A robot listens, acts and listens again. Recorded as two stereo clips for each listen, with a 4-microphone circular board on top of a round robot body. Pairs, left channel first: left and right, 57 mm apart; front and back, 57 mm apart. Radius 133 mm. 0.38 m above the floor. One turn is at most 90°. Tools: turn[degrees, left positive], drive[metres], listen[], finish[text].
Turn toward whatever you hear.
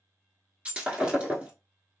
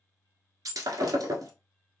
Thought: The breaking glass: 160° right.
Action: turn[-90]
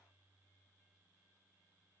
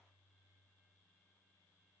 Thought: Nothing new. It was at 70° right.
Action: turn[-70]
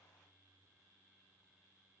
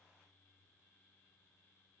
Action: finish[I heard breaking glass from this way, but can't make it out now.]